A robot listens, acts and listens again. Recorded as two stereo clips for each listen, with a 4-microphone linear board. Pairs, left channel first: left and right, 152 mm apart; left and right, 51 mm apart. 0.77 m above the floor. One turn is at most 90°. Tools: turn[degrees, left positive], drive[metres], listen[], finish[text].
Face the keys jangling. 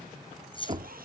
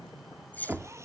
Thought: The keys jangling: about 35° left or 145° left.
Action: turn[35]
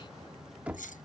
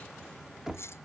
Thought: So it is at 120° left.
Action: turn[90]
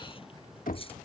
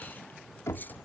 Thought: Nothing new. It was at 30° left.
Action: turn[30]
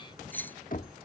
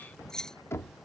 Thought: The keys jangling is now 10° left.
Action: turn[10]
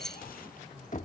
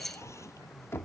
Action: finish[Found it: keys jangling, straight ahead.]